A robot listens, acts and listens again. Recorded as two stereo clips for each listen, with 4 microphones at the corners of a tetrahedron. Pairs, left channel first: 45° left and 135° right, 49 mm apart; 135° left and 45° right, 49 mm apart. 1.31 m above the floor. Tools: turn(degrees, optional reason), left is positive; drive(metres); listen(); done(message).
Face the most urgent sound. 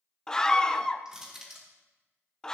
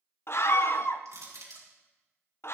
turn(degrees=120, reason="The scream: 120° left.")
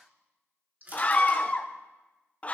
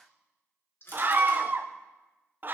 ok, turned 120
turn(degrees=-10, reason="The scream is now 10° right.")
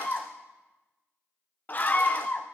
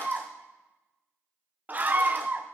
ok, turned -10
done("Found it: a scream, straight ahead.")